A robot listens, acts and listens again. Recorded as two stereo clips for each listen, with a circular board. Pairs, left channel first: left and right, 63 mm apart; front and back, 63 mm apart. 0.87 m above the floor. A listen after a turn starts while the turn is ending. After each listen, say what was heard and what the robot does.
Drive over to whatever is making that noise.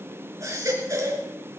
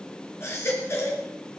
The baby crying: 50° right. Turn 50° right.
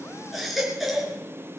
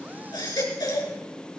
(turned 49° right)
Drive 1.0 m forward.
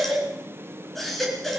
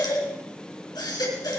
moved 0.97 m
Drive 1.0 m forward.
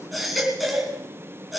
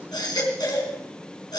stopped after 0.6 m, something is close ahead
Something is in my way. I am facing the baby crying but have not reached it.